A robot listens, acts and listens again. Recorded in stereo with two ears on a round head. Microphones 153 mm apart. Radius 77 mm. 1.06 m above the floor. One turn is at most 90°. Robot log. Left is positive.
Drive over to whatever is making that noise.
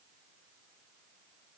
cmd idle
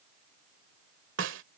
cmd yaw -90
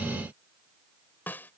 note: So it is at 10° left.
cmd yaw +10
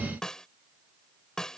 cmd fwd 1.0
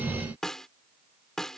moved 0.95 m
cmd fwd 1.0
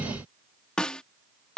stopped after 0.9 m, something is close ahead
end: I am next to the snare drum.